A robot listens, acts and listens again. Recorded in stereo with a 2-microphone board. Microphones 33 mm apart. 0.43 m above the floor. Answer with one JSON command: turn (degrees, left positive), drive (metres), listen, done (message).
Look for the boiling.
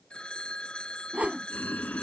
{"turn": 90}
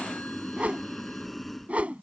{"done": "Found it: boiling, straight ahead."}